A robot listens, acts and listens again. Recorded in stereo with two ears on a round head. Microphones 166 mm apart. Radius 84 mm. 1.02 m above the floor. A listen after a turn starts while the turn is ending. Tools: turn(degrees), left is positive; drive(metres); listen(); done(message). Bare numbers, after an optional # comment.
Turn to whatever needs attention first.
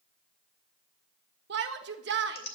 # The shout: about 65° right or 115° right.
turn(-65)
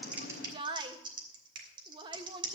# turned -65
# So it is at 25° right.
turn(-25)
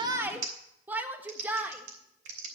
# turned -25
# The shout is now 10° right.
turn(-10)
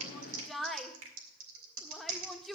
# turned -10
done("Found it: a shout, straight ahead, 1 to 2 m away.")